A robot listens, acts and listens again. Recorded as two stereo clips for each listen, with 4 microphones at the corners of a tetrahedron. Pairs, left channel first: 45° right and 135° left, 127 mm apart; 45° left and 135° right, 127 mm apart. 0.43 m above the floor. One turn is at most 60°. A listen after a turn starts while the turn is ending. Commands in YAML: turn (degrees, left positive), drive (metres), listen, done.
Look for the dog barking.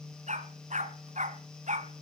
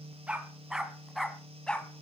turn: 60
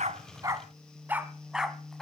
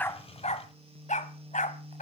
turn: 45
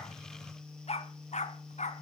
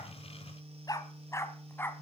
turn: -30
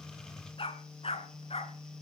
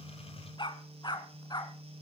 turn: -10
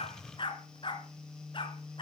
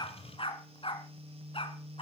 done: "Facing the dog barking, 2 to 4 m away."